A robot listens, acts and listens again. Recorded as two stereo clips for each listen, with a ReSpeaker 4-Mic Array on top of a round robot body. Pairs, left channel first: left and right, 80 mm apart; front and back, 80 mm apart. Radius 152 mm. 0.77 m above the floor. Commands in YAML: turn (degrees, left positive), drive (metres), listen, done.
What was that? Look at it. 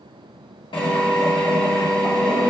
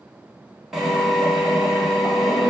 turn: 95
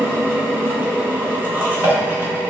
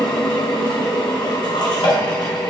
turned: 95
turn: -20
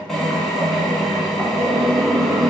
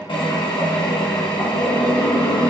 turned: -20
done: "Found it: a drill, straight ahead."